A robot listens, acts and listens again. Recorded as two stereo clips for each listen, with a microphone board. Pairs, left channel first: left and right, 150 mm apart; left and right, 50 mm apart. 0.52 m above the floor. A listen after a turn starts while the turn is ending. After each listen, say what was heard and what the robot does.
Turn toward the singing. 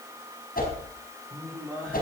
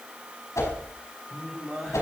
Turn 30° left.
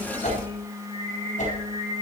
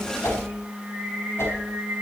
So it is at 35° right. Turn 35° right.
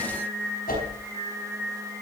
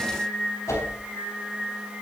The singing is now 15° right. Turn 15° right.
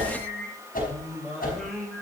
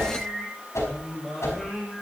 Found it: singing, straight ahead.